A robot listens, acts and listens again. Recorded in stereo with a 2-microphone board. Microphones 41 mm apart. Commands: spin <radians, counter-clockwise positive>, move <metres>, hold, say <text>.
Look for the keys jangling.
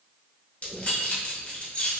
spin 0.61
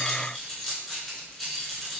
say Facing the keys jangling.